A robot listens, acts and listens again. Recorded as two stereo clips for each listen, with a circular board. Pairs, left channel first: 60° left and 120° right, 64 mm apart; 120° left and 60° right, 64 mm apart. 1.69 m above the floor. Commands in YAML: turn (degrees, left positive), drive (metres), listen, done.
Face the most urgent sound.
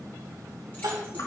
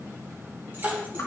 turn: -130
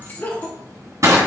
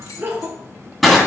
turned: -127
done: "Facing the crying."